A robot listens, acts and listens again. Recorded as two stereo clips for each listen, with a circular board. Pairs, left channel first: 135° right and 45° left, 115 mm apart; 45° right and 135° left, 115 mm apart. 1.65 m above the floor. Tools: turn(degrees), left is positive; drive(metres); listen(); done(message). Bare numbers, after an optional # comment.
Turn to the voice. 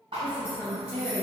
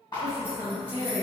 # The woman speaking: 60° right.
turn(-60)
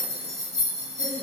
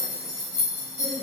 listen()
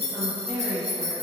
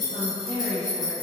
# The woman speaking is now 10° right.
turn(-10)
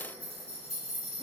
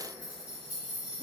listen()
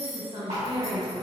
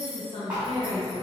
done("Found it: a woman speaking, straight ahead.")